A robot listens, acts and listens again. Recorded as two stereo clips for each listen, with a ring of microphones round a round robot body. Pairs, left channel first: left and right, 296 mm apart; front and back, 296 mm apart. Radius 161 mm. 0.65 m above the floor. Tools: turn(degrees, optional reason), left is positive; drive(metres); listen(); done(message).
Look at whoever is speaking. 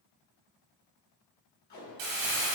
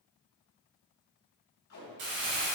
listen()
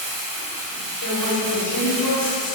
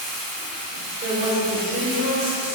turn(degrees=125, reason="The woman speaking: 125° left.")
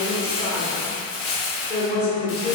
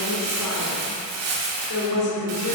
turn(degrees=35, reason="The woman speaking is now 35° left.")
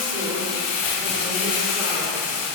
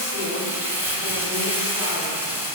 listen()
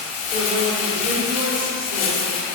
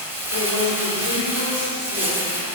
turn(degrees=-15, reason="The woman speaking is now 15° right.")
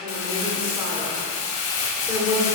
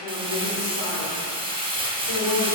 done("Found it: a woman speaking, straight ahead.")